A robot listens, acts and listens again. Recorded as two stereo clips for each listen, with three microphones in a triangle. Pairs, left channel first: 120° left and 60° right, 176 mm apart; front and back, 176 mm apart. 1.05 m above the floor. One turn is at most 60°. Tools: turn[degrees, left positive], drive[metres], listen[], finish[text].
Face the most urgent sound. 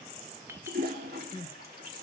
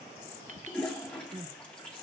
Thought: The crying: 155° left.
Action: turn[60]
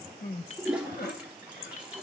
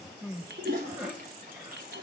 Thought: The crying is now 100° left.
Action: turn[60]
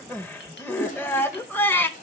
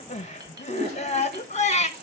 Thought: The crying is now 40° left.
Action: turn[40]
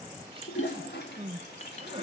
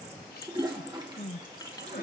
Action: finish[Found it: crying, straight ahead.]